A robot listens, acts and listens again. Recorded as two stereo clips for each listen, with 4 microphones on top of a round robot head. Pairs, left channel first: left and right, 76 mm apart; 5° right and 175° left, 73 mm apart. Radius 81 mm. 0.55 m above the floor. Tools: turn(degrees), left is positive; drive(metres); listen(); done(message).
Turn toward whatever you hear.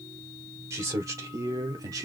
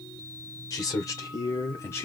turn(degrees=-55)
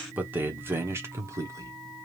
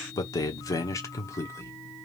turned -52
turn(degrees=-50)
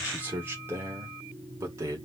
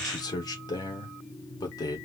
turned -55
turn(degrees=-35)
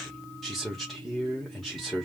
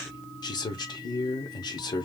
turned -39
done("Facing the man speaking, 1 to 2 m away.")